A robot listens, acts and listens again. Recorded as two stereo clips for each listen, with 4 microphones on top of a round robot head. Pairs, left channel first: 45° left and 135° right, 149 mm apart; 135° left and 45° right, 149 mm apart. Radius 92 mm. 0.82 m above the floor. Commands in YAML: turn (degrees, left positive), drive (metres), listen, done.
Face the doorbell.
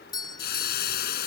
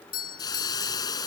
turn: 110
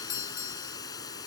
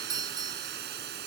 turn: 20
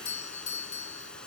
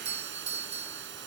done: "Found it: a doorbell, straight ahead."